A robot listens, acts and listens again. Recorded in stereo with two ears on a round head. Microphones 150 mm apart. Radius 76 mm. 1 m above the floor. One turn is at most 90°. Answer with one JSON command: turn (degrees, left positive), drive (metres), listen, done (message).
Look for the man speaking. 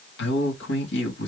{"turn": 90}
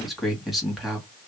{"done": "Found it: a man speaking, straight ahead."}